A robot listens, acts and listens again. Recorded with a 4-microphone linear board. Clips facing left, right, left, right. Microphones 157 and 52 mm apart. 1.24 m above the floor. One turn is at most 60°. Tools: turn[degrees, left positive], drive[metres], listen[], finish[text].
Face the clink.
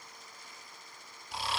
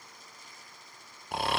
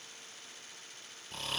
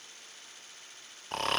Action: listen[]
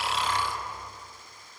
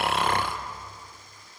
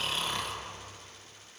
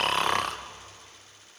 Action: listen[]
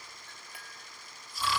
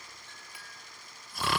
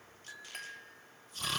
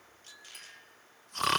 Thought: The clink: about 60° left or 120° left.
Action: turn[60]
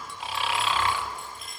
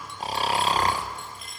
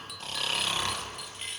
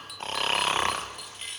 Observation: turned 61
Action: finish[Found it: a clink, straight ahead, 1 to 2 m away.]